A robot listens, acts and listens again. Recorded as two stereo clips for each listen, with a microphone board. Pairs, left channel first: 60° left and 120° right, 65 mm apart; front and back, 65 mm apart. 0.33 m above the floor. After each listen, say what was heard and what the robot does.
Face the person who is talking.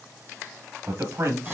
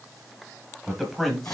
The man speaking: 85° right. Turn 85° right.
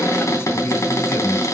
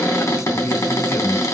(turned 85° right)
The man speaking is now 35° left. Turn 35° left.
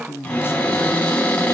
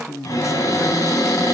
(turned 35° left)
The man speaking is now 15° left. Turn 15° left.
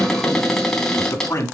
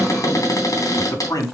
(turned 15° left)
The man speaking is now 25° left. Turn 25° left.
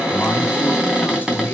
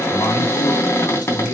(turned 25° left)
Keep listening.
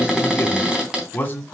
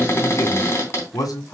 Found it: a man speaking, straight ahead.